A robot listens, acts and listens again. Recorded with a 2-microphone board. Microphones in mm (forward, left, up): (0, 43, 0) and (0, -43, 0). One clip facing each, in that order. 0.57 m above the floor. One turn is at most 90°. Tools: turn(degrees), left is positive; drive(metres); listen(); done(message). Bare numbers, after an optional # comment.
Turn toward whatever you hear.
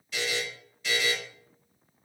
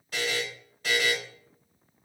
# The buzzer: about 50° right or 130° right.
turn(-50)
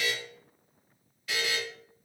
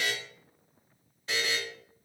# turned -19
# So it is at 30° right.
turn(-30)
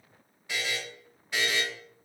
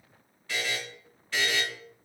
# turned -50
# The buzzer is now 20° left.
turn(20)
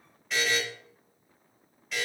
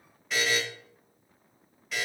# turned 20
done("Facing the buzzer.")